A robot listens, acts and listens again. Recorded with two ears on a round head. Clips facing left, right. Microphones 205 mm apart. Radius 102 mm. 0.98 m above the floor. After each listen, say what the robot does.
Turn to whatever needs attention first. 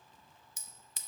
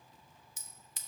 Keep listening.
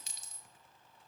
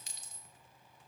Keep listening.
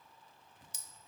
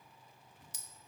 I can't make out anything urgent to turn to.